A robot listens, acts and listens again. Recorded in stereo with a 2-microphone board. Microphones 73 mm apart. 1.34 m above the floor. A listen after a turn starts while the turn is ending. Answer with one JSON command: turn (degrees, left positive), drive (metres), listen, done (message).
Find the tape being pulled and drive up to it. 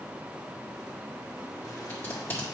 {"turn": 30}
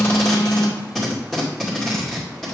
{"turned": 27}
{"drive": 1.0}
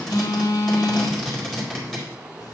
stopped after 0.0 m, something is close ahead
{"done": "Something is in my way. I am facing the tape being pulled but have not reached it."}